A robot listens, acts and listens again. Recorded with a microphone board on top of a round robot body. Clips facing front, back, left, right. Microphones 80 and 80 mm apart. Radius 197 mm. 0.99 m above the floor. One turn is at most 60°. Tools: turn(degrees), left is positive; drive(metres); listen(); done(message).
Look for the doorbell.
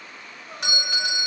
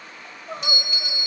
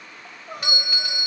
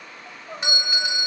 turn(degrees=-25)
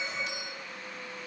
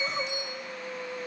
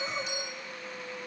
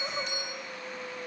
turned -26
listen()
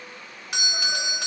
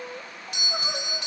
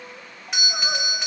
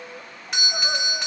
done("Found it: a doorbell, straight ahead.")